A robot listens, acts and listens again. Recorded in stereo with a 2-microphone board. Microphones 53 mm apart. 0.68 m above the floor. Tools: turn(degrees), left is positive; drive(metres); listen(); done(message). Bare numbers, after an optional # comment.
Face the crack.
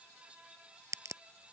turn(-90)
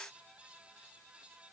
done("I heard a crack from this way, but can't make it out now.")